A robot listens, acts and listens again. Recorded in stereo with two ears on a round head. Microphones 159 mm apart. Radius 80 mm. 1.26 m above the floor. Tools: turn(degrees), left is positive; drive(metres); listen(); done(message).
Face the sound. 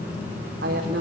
turn(degrees=-60)
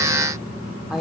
done("Found it: a woman speaking, straight ahead, over 4 m away.")